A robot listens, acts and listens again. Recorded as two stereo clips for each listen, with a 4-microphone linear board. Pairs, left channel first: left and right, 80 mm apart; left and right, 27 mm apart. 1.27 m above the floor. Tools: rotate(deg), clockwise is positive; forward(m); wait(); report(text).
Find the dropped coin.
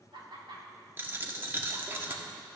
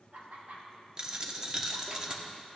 rotate(30)
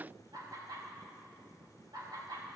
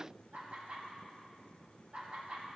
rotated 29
wait()
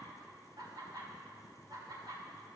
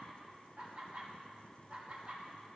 report("I heard a dropped coin, but can't make it out now. It was about straight ahead or 125° right.")